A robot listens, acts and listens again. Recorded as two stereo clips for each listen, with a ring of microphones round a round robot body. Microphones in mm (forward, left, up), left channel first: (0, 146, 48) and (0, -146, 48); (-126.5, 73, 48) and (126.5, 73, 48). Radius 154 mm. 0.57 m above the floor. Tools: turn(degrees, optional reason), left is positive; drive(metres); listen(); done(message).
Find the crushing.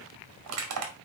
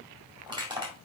turn(degrees=-70, reason="The crushing: 70° right.")
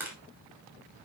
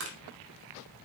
turn(degrees=-10, reason="The crushing is now 10° right.")
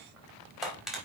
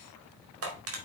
done("Facing the crushing.")